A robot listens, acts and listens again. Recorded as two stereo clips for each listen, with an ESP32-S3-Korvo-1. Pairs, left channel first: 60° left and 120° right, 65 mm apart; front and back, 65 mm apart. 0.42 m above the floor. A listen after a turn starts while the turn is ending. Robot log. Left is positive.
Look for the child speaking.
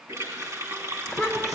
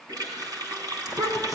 note: The child speaking: 155° left.
cmd yaw +155
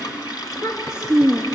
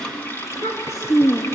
note: The child speaking is now 20° left.
cmd yaw +20
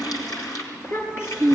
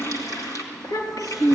note: The child speaking is now 10° left.
cmd yaw +10
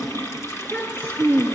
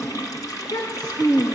end: Facing the child speaking.